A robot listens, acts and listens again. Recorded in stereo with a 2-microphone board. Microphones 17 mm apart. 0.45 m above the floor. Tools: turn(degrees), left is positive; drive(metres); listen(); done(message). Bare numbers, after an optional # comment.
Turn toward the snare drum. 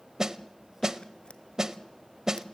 # The snare drum: about 35° right or 145° right.
turn(-35)
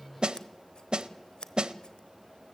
# So it is at 110° right.
turn(-110)
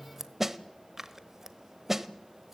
# The snare drum is now 25° right.
turn(-25)
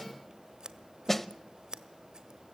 # The snare drum is now 10° left.
turn(10)
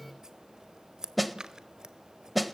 done("Facing the snare drum, under 1 m away.")